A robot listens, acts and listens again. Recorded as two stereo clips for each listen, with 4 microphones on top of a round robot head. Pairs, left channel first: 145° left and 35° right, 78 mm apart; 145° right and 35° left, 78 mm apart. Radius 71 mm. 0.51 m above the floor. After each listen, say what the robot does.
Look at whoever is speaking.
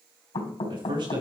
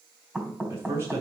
Turn 25° right.
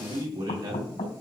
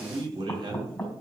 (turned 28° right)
Facing the man speaking, over 4 m away.